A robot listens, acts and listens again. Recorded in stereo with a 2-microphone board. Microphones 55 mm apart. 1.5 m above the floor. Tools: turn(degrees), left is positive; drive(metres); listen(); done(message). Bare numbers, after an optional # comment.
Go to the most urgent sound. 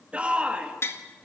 # The shout: about 20° right or 160° right.
turn(-20)
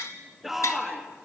drive(1.0)
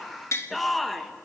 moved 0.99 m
drive(1.0)
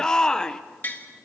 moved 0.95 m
# The shout is now 15° left.
turn(15)
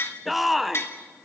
drive(1.0)
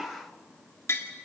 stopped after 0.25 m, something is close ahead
listen()
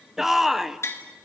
done("Arrived at the shout, straight ahead.")